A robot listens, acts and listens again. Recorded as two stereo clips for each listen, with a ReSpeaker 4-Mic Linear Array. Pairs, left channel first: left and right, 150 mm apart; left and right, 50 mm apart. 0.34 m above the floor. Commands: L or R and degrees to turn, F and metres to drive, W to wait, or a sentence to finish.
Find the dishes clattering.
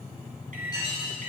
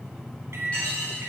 L25
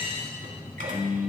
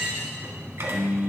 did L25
W
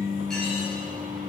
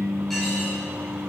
W
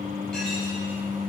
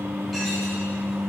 I heard dishes clattering, but can't make it out now. It was about straight ahead or 130° left.